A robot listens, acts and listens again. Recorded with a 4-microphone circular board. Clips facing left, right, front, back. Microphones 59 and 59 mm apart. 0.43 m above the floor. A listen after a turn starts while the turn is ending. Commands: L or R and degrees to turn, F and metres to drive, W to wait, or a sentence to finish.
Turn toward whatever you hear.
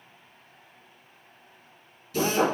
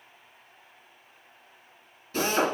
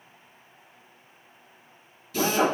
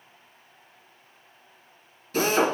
R135
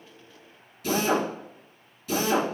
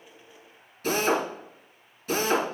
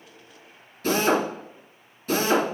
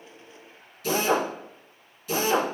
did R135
R45
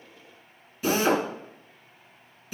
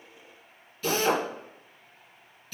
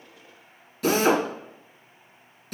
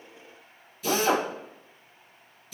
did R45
L15
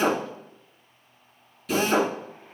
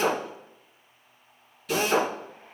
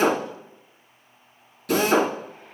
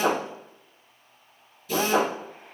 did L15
Found it: a drill, straight ahead.